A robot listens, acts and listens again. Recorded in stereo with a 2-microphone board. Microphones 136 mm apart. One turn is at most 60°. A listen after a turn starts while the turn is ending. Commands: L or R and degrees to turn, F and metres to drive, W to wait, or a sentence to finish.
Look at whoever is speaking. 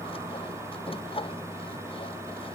W
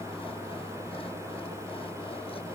W
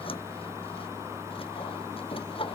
I can't make out anyone speaking, only sawing.